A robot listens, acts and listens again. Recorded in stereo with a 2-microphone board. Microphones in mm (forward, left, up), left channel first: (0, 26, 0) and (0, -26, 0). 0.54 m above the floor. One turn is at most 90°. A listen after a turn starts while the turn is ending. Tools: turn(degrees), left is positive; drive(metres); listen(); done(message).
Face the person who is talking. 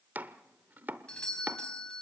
listen()
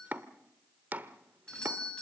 listen()
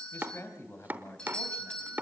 turn(degrees=55)
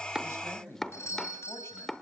turn(degrees=65)
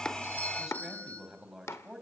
turn(degrees=-10)
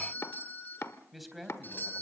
done("Facing the man speaking.")